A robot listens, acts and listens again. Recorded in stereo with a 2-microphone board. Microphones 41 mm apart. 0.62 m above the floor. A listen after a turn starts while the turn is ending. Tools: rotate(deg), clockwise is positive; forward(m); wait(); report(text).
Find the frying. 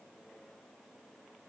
wait()
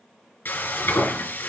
rotate(-60)
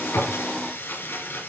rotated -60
rotate(-60)
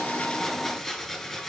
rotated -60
report("Facing the frying, 2 to 4 m away.")